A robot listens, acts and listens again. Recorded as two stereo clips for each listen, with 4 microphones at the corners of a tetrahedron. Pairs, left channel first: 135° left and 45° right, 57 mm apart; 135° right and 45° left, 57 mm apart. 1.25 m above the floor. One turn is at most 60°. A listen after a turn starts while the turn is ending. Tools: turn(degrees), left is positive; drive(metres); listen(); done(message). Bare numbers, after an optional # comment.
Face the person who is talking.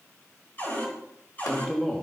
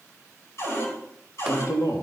# The man speaking: 155° right.
turn(-60)
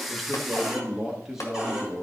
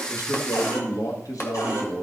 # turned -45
# The man speaking is now 135° right.
turn(-60)
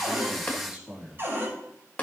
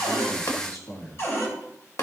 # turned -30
# The man speaking is now 120° right.
turn(-60)
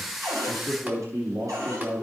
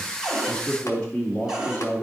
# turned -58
# The man speaking is now 70° right.
turn(-60)
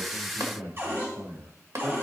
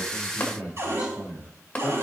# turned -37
# The man speaking is now 35° right.
turn(-35)
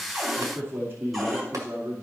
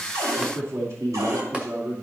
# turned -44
# The man speaking is now 10° left.
turn(10)
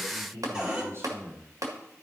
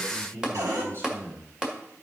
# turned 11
done("Facing the man speaking.")